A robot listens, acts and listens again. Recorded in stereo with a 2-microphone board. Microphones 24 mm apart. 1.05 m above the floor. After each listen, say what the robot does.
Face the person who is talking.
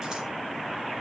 Keep listening.
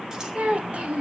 Turn 60° right.
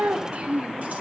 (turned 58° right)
Turn 60° right.
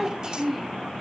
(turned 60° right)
Facing the child speaking.